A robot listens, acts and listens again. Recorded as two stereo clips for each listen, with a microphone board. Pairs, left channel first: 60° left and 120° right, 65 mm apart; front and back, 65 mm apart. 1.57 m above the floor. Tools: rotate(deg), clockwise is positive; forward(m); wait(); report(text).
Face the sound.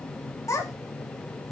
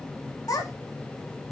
rotate(-20)
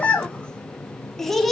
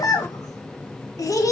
rotate(30)
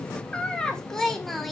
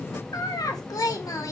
rotate(30)
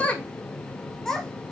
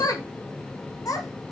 rotate(20)
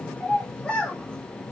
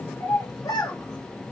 rotate(15)
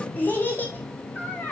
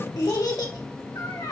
report("Found it: a child speaking, straight ahead.")